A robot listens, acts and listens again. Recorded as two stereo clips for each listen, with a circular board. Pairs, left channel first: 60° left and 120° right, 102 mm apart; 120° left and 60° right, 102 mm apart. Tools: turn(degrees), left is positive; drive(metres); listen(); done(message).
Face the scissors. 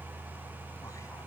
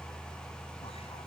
listen()
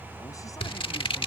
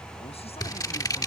turn(degrees=70)
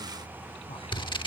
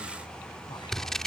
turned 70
turn(degrees=35)
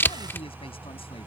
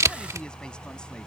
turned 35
done("Facing the scissors.")